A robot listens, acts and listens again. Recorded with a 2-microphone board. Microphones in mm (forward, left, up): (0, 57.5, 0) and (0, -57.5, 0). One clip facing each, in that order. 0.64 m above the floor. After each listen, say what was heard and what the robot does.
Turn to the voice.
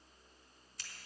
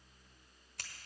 Keep listening.
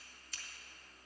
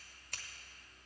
Keep listening.
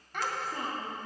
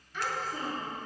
Turn 90° left.
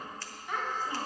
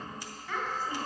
So it is at 25° left. Turn 25° left.
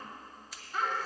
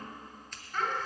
The child speaking is now 10° left. Turn 10° left.
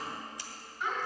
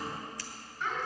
Facing the child speaking.